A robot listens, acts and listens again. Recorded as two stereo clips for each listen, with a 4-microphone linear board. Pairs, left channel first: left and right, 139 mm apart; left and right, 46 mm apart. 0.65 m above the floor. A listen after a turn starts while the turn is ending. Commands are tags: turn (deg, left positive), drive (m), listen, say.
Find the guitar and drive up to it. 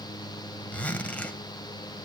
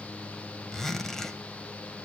<listen/>
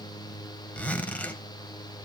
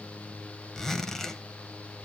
<listen/>
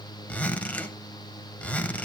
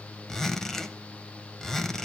<say>I can't make out a guitar, only a zipper.</say>